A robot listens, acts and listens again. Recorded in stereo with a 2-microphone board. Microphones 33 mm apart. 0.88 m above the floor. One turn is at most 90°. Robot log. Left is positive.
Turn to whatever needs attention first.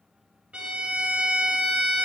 cmd idle
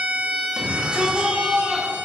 note: The shout: about 30° right or 150° right.
cmd yaw -30
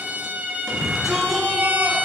end: Found it: a shout, straight ahead.